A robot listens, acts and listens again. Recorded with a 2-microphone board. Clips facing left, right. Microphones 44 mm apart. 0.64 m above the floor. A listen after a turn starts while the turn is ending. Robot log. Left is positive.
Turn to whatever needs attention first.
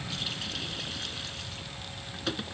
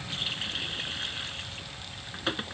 cmd idle
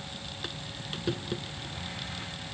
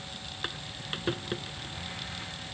cmd idle
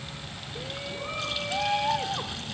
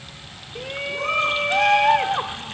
note: The shout: about 60° right or 120° right.
cmd yaw -60
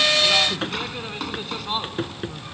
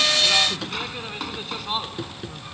end: Found it: a shout, straight ahead.